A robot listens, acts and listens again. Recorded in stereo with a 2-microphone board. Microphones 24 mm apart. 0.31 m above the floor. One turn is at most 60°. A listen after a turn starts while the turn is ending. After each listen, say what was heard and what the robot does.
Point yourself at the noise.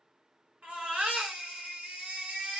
The baby crying: about 65° right or 115° right. Turn 60° right.
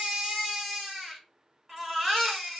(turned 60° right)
Found it: a baby crying, straight ahead, 1 to 2 m away.